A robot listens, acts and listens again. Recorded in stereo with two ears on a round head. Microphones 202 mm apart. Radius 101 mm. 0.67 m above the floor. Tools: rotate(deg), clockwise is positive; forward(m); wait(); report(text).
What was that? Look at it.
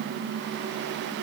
wait()
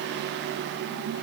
wait()
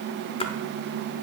rotate(-25)
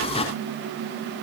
wait()
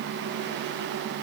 report("I heard a splash, but can't make it out now. It was about straight ahead or 130° left.")